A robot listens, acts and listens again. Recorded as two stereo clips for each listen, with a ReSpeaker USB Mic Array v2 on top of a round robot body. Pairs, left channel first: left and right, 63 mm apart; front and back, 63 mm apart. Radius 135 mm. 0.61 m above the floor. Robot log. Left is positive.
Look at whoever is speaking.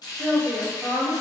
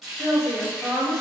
note: The woman speaking: 75° right.
cmd yaw -75
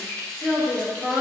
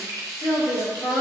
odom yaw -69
end: Found it: a woman speaking, straight ahead, 1 to 2 m away.